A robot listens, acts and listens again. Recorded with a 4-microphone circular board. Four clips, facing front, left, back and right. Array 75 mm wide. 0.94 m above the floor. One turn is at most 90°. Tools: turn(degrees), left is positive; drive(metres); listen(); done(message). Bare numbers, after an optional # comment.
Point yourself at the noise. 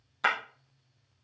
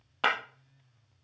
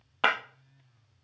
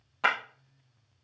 # The breaking glass: 165° left.
turn(90)
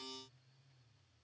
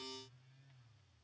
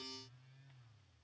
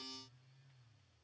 # Nothing new. It was at 75° left.
turn(75)
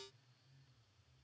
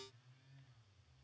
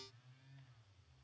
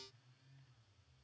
done("Facing where the breaking glass came from. I can't hear it now.")